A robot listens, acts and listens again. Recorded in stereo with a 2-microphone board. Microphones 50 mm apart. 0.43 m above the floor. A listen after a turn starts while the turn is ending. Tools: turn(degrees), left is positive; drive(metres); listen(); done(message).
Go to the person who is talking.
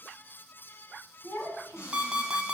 turn(degrees=65)
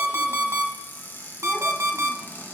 listen()
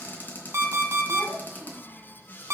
drive(metres=1.0)
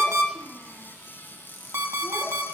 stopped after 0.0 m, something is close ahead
listen()
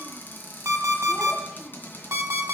listen()
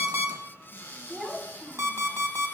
done("Blocked. The child speaking is further on, straight ahead.")